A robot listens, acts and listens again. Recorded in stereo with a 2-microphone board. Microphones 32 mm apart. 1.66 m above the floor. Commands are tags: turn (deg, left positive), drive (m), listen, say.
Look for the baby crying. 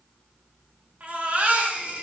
<turn deg="-45"/>
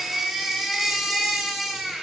<turn deg="-10"/>
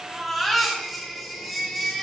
<say>Found it: a baby crying, straight ahead, 1 to 2 m away.</say>